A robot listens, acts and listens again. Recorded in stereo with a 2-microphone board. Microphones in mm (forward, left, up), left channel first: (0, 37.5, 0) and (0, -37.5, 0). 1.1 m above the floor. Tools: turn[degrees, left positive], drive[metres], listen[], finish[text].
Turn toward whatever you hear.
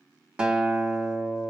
Action: turn[-30]
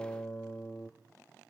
Thought: So it is at 20° left.
Action: turn[20]
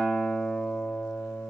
Action: finish[Facing the guitar.]